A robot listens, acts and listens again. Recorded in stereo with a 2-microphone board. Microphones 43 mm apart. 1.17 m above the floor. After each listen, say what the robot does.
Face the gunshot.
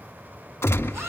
Turn 90° left.
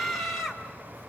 Facing where the gunshot came from. I can't hear it now.